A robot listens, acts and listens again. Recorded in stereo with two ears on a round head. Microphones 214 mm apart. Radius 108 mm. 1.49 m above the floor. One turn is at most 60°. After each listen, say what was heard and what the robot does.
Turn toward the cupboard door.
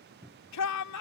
Turn 30° right.
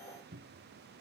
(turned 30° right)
So it is at 140° right. Turn 60° right.
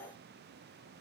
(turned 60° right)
Nothing new. It was at 80° right. Turn 60° right.
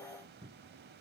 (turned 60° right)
The cupboard door is now 20° right. Turn 20° right.
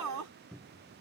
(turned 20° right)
Found it: a cupboard door, straight ahead.